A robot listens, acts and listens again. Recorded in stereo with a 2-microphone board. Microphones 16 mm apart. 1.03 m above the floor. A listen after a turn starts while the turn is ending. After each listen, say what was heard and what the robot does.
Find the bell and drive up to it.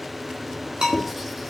The bell: about 75° right or 105° right. Turn 75° right.
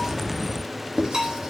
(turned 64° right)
So it is at 40° right. Turn 40° right.
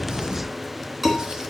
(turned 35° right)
Keep listening.
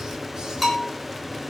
Drive 1.0 m forward.
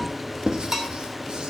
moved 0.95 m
The bell is now 15° right. Turn 15° right.
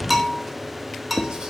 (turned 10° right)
Drive 1.0 m forward.
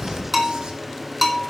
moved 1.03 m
The bell is now 10° right. Turn 10° right.
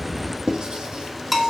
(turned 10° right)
Drive 1.0 m forward.
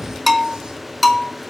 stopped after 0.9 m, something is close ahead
Arrived at the bell, straight ahead.